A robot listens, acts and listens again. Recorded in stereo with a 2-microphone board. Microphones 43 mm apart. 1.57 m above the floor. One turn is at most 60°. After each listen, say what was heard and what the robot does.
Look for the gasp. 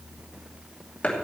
Keep listening.
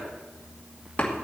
Keep listening.
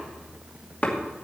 I can't make out a gasp, only chopping.